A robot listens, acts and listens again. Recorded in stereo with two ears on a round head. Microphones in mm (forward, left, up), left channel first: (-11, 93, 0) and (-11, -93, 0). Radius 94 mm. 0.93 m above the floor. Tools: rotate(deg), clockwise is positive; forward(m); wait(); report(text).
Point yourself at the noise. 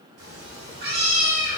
rotate(40)
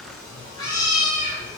rotate(-25)
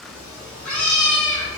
rotate(-10)
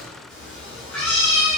report("Facing the cat meowing.")